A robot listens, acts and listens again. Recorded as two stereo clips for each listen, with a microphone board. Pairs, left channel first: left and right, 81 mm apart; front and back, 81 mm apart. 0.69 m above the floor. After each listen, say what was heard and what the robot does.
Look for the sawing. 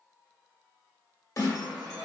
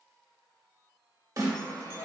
The sawing: 55° right. Turn 55° right.
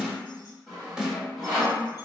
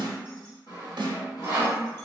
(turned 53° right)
Found it: sawing, straight ahead.